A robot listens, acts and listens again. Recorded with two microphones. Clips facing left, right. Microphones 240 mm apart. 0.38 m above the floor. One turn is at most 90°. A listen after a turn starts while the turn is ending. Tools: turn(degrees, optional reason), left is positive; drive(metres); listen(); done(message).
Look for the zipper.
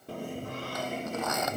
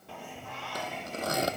turn(degrees=-35, reason="The zipper: about 35° right or 145° right.")
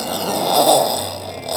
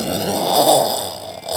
done("Found it: a zipper, straight ahead.")